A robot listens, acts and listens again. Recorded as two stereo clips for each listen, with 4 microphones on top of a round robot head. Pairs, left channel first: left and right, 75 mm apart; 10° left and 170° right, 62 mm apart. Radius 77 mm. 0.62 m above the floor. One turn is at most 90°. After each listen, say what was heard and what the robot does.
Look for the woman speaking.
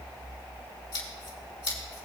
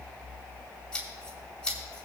Keep listening.
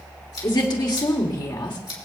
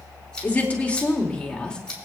The woman speaking: 85° left. Turn 85° left.
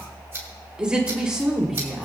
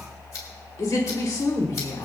Found it: a woman speaking, straight ahead, 2 to 4 m away.